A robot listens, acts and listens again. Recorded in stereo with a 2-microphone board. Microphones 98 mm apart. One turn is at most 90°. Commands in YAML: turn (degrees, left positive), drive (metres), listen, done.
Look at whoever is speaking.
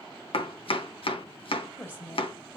turn: 20
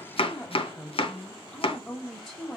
done: "Found it: a woman speaking, straight ahead, 1 to 2 m away."